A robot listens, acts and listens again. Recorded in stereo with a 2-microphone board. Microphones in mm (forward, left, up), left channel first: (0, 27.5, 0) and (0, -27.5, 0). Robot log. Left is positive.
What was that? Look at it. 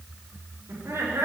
note: The laughter: about 60° right or 120° right.
cmd yaw -60
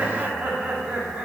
note: So it is at 20° right.
cmd yaw -20
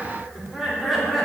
end: Found it: laughter, straight ahead, 2 to 4 m away.